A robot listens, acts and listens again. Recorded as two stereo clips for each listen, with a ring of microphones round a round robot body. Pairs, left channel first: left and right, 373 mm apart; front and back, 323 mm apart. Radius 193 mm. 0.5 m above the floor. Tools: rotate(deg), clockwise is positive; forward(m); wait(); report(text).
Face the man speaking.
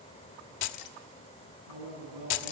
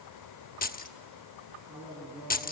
rotate(100)
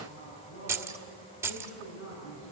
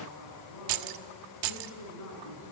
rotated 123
rotate(-30)
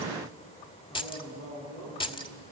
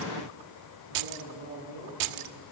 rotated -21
rotate(-10)
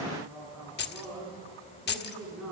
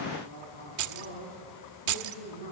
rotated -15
report("Facing the man speaking, over 4 m away.")